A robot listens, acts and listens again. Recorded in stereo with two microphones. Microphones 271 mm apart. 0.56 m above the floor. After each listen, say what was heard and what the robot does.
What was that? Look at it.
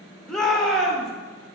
Turn 30° left.
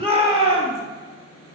So it is at 25° right. Turn 25° right.
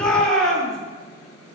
Facing the shout, 1 to 2 m away.